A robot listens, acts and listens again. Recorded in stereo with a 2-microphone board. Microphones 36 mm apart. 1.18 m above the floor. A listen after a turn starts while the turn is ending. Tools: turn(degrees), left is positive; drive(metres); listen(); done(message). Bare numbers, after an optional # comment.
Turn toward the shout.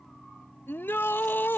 turn(90)
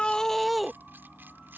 done("Facing the shout.")